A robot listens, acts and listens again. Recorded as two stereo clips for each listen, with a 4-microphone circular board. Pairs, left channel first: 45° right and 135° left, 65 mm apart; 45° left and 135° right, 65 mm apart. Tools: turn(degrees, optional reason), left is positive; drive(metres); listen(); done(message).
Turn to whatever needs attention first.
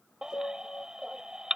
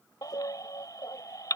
turn(degrees=55, reason="The baby crying: 55° left.")
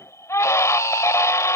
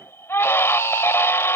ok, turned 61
done("Found it: a baby crying, straight ahead.")